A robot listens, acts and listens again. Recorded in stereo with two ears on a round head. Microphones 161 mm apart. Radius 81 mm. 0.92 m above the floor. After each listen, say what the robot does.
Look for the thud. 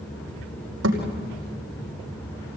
Turn 90° right.
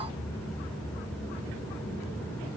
Facing where the thud came from. I can't hear it now.